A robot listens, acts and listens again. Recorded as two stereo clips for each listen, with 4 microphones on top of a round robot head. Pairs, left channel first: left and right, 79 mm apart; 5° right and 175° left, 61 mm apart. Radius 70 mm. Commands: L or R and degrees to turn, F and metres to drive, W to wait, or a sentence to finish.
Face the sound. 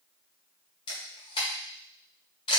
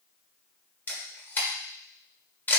L55
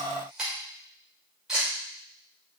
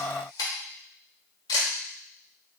Found it: a camera shutter, straight ahead, 1 to 2 m away.